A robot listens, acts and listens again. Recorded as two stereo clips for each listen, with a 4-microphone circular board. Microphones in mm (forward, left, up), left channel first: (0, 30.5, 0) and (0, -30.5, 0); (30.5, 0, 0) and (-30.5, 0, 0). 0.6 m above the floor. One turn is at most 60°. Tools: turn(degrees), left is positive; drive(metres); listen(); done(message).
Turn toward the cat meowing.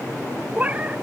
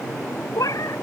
turn(degrees=-25)
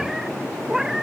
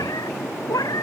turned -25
turn(degrees=-10)
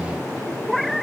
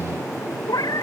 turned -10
done("Facing the cat meowing.")